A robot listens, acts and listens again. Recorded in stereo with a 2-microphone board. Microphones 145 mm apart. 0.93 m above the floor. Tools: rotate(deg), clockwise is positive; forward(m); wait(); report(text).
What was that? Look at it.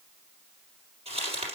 rotate(45)
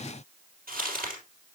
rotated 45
rotate(90)
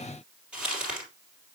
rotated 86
report("Facing the crumpling.")